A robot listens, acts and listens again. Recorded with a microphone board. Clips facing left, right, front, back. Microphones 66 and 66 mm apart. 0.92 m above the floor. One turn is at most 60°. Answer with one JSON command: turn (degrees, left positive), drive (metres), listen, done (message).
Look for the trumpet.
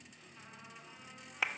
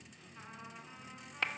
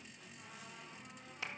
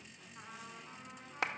{"listen": true}
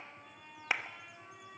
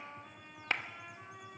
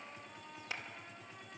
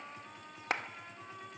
{"turn": -60}
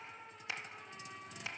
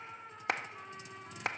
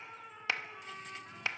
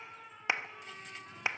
{"turn": -60}
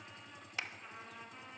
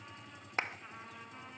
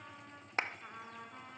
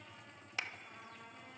{"turn": -10}
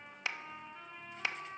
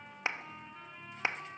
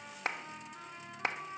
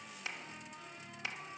{"done": "Facing the trumpet, over 4 m away."}